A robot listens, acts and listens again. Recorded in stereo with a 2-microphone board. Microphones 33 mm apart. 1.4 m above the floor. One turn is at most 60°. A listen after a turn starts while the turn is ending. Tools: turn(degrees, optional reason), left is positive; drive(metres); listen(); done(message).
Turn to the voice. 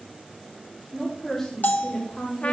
turn(degrees=30)
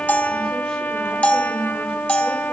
listen()
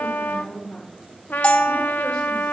turn(degrees=60, reason="So it is at 140° left.")
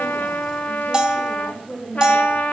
turn(degrees=60, reason="The woman speaking is now 80° left.")
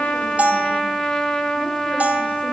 turn(degrees=20, reason="Nothing new. It was at 20° left.")
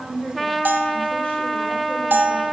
turn(degrees=35, reason="The woman speaking is now 35° left.")
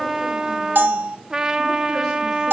listen()
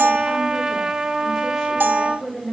turn(degrees=10, reason="The woman speaking is now 10° left.")
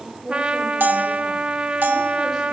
done("Found it: a woman speaking, straight ahead.")